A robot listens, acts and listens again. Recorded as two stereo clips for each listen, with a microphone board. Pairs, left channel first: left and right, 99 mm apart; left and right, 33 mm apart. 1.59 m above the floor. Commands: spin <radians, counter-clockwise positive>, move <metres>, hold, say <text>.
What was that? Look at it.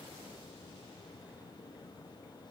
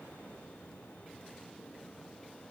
hold
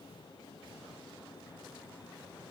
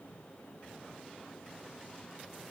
hold
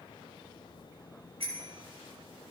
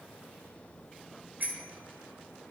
spin -1.57
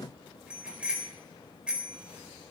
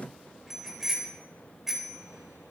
spin -0.17
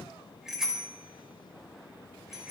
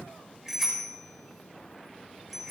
say Facing the bicycle bell.